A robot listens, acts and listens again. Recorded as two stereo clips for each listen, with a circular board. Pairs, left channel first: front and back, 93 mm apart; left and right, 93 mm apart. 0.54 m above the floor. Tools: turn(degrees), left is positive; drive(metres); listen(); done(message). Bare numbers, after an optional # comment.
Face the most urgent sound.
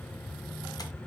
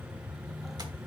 listen()
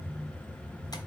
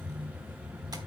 listen()
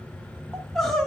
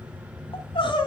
# The crying: 85° left.
turn(85)
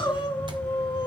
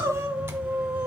# The crying is now 25° right.
turn(-25)
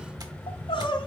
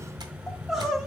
done("Facing the crying, 1 to 2 m away.")